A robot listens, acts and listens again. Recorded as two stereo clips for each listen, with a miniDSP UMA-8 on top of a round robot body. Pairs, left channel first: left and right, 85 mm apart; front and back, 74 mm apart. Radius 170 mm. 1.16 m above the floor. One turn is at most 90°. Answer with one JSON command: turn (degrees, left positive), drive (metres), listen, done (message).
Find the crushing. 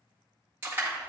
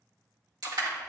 {"turn": -90}
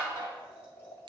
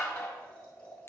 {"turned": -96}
{"turn": -60}
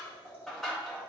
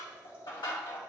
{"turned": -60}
{"done": "Facing the crushing."}